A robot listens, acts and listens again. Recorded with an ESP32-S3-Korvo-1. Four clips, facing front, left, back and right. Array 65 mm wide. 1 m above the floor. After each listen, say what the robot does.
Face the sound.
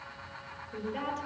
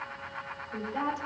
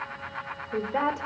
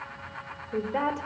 Turn 140° right.
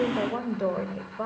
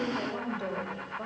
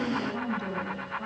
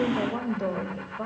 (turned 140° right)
Turn 15° right.
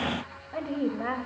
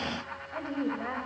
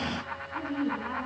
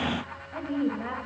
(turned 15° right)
Turn 10° left.
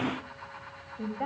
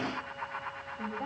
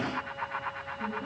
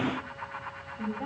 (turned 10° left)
Facing the woman speaking, over 4 m away.